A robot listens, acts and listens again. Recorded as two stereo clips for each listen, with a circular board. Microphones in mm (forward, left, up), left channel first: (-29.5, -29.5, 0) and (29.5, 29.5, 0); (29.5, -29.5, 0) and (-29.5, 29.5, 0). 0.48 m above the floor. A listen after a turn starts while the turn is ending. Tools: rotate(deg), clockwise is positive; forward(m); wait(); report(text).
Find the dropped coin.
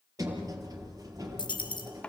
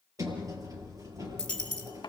rotate(125)
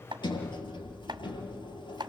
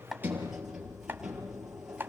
report("I heard a dropped coin from this way, but can't make it out now.")